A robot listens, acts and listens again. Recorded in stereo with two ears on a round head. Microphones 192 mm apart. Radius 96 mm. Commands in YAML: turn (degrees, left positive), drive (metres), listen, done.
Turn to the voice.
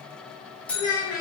turn: 65
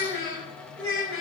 turn: 60
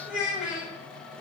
done: "Facing the child speaking, 2 to 4 m away."